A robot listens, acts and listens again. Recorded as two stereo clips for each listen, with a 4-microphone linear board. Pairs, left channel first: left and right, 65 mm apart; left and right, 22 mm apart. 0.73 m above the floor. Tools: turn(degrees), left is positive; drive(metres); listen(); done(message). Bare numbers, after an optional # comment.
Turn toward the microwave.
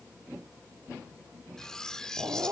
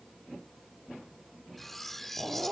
listen()
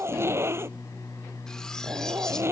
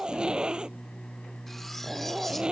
# The microwave: about 75° left or 105° left.
turn(75)
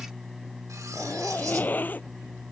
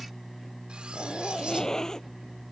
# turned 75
done("Found it: a microwave, straight ahead.")